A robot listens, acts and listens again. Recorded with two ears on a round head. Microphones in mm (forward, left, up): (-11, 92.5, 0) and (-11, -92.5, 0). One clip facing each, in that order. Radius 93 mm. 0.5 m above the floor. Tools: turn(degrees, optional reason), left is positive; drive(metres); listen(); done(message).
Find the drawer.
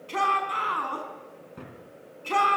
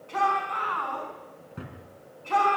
turn(degrees=-30)
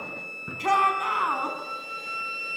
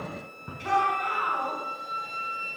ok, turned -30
listen()
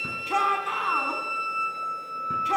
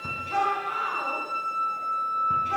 listen()
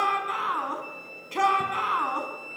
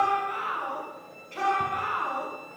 done("I heard a drawer, but can't make it out now. It was about 25° left or 145° right.")